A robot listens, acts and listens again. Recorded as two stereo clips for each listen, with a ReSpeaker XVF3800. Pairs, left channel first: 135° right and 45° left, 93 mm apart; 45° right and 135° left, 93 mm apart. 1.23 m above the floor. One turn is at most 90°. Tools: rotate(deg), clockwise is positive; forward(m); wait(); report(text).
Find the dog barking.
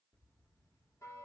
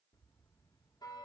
wait()
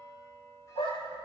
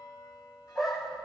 rotate(90)
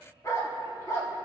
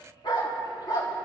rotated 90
rotate(85)
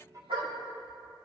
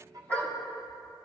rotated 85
rotate(-30)
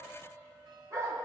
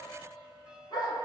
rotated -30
rotate(10)
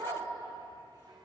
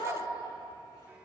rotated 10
report("Found it: a dog barking, straight ahead.")